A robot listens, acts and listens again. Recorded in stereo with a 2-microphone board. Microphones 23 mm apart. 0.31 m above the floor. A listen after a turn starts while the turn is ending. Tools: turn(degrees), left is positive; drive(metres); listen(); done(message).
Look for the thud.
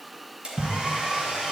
turn(degrees=-35)
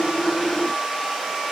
listen()
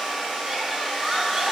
done("I heard a thud, but can't make it out now. It was about straight ahead or 110° right.")